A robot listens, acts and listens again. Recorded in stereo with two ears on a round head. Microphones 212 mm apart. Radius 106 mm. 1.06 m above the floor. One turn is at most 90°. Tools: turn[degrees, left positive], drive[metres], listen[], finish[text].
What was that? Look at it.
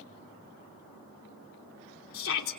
Thought: The shout: about 60° left or 120° left.
Action: turn[60]
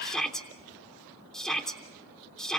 Action: finish[Facing the shout.]